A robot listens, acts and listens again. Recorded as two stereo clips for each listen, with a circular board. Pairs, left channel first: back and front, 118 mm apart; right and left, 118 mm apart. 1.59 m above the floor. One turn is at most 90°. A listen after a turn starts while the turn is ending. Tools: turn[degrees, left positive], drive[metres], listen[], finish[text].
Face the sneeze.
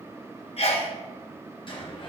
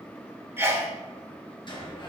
Thought: The sneeze: 160° left.
Action: turn[90]
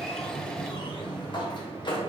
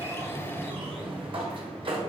Thought: Nothing new. It was at 70° left.
Action: turn[70]
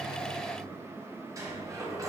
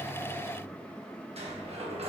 Action: finish[Facing where the sneeze came from. I can't hear it now.]